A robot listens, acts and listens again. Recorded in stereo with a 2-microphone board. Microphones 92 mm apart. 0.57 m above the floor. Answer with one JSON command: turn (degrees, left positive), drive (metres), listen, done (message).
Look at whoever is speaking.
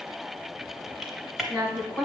{"turn": 30}
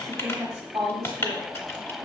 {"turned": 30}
{"turn": -35}
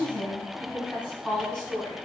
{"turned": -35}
{"done": "Found it: a woman speaking, straight ahead."}